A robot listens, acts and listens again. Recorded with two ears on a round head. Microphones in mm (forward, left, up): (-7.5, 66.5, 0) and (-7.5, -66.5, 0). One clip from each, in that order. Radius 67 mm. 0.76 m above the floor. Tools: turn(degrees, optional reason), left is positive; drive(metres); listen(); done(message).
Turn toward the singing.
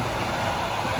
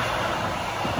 listen()
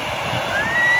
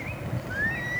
turn(degrees=65, reason="The singing: about 65° left or 115° left.")
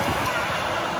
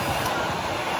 listen()
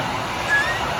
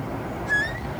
turn(degrees=25, reason="So it is at 25° left.")
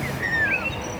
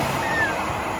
turn(degrees=10, reason="The singing is now 10° left.")
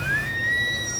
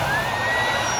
done("Facing the singing.")